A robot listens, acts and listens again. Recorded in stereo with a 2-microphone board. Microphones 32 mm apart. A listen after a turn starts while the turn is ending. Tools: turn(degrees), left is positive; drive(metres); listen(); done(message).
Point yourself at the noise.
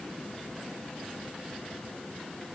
listen()
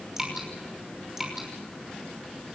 turn(degrees=-30)
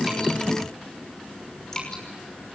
turn(degrees=15)
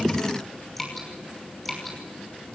done("Facing the dripping, over 4 m away.")